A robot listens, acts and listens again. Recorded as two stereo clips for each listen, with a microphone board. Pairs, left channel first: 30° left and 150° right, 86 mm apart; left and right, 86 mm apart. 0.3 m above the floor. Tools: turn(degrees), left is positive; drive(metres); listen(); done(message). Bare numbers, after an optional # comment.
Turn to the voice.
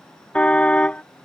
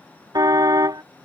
listen()
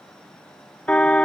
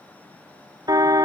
listen()
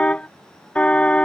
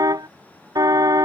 done("I can't make out anyone speaking to turn to.")